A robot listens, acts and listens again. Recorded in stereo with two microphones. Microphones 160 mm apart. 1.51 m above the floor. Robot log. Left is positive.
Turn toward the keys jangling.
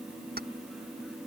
cmd yaw -90
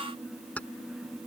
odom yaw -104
note: So it is at 10° left.
cmd yaw +10
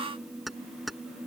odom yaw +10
end: Facing the keys jangling.